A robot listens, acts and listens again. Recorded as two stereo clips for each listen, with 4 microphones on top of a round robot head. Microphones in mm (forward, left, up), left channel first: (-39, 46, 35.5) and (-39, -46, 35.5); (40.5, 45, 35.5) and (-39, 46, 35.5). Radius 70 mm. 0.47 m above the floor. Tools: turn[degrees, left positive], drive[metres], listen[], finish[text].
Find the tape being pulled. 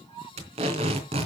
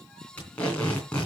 Thought: The tape being pulled: 80° right.
Action: turn[-80]
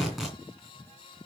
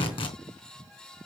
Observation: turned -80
Action: finish[Facing the tape being pulled, 2 to 4 m away.]